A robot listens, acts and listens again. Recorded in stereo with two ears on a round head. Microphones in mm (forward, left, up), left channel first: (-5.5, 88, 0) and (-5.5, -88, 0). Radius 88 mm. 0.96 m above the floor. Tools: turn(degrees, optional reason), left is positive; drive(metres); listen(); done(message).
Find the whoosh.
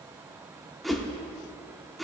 turn(degrees=30)
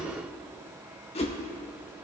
turn(degrees=150, reason="So it is at 150° left.")
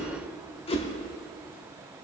turn(degrees=30, reason="The whoosh is now 30° left.")
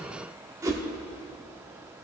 turn(degrees=-15, reason="The whoosh is now 15° right.")
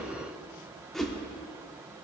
done("Facing the whoosh, 1 to 2 m away.")